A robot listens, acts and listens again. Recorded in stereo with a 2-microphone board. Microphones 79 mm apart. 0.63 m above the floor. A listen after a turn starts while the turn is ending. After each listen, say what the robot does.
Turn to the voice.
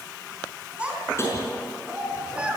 Turn 15° right.
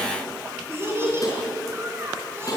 Turn 30° right.
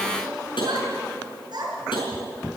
Turn 115° right.
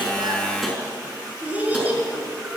Turn 20° right.
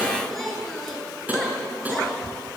Facing the child speaking, over 4 m away.